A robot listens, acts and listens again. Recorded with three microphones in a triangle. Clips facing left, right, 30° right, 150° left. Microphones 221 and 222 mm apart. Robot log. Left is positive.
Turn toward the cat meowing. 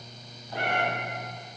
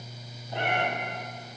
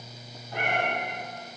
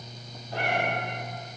note: The cat meowing: 160° right.
cmd yaw -160
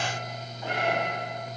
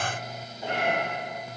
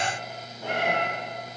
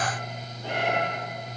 note: The cat meowing is now 25° right.
cmd yaw -25
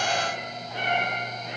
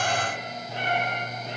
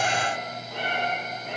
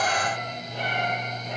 note: The cat meowing is now 30° right.
cmd yaw -30
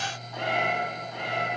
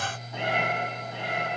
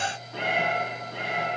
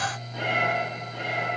note: The cat meowing is now 20° right.
cmd yaw -20
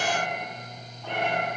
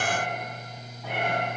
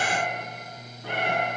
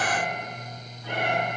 end: Found it: a cat meowing, straight ahead.